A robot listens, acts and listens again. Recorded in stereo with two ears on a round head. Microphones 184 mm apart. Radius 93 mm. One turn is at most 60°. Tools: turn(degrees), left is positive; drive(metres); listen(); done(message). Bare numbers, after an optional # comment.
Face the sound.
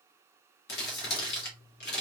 # The crumpling: about 55° left or 125° left.
turn(55)
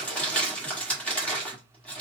done("Facing the crumpling, 1 to 2 m away.")